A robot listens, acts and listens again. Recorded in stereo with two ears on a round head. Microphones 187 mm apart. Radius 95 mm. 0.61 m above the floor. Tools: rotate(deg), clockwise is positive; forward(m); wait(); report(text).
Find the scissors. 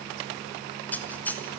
rotate(-30)
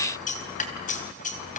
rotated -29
rotate(-140)
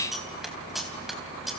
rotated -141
report("Found it: scissors, straight ahead, 2 to 4 m away.")